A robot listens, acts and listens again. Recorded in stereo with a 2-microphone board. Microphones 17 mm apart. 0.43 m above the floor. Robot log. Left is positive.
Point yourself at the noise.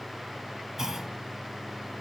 note: The clunk: about 35° right or 145° right.
cmd yaw -35
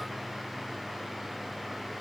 cmd idle
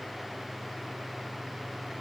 end: I heard a clunk, but can't make it out now. It was about straight ahead or 110° right.